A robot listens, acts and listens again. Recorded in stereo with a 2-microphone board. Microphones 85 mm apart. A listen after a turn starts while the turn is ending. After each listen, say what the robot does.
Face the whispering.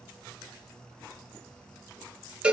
Keep listening.
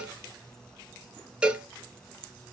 Keep listening.
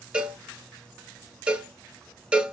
I can't make out whispering, only a cowbell.